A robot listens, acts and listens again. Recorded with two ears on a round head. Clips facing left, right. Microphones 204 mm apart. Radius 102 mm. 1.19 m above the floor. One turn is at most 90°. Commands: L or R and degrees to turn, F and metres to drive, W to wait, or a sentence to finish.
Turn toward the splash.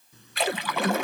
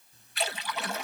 L55
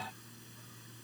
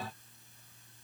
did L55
W
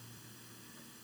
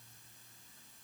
I heard a splash, but can't make it out now. It was about straight ahead or 70° left.